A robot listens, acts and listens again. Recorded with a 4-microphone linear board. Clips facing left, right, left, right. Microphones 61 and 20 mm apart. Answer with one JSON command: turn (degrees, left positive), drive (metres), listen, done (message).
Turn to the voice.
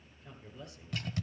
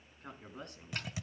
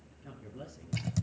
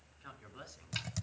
{"turn": -60}
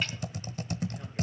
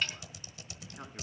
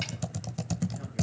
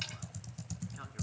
{"listen": true}
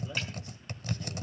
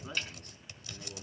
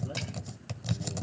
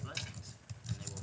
{"turn": -55}
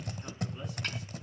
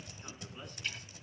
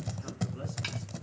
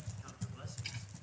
{"listen": true}
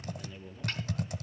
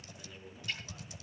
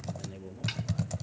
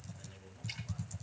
{"done": "Facing the man speaking."}